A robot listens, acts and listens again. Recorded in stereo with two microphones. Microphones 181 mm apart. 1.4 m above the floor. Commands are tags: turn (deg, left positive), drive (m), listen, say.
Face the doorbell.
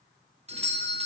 <turn deg="-35"/>
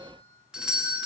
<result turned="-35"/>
<say>Facing the doorbell.</say>